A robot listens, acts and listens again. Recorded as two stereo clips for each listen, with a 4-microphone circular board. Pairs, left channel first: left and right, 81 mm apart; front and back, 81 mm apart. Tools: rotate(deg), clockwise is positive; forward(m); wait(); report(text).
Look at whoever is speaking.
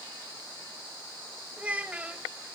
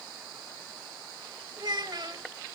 rotate(160)
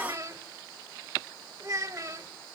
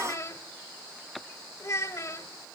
rotate(45)
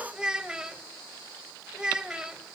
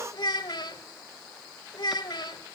rotate(10)
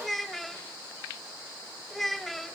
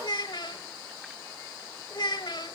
report("Facing the child speaking.")